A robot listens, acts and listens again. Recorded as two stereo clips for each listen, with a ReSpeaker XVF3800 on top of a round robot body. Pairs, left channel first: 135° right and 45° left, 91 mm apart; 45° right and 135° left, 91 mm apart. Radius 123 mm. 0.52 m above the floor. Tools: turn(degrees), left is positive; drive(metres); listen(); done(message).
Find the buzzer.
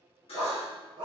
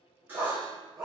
turn(degrees=-155)
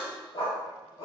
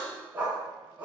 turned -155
turn(degrees=-25)
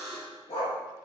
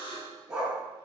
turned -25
turn(degrees=-15)
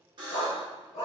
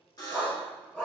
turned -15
done("Found it: a buzzer, straight ahead, 1 to 2 m away.")